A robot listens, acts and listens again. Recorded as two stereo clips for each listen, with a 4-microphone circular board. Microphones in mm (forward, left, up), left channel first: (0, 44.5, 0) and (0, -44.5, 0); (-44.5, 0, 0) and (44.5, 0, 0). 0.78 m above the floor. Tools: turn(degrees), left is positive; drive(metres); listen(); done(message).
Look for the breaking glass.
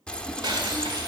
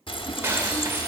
turn(degrees=-60)
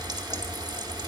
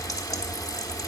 done("I heard breaking glass from this way, but can't make it out now.")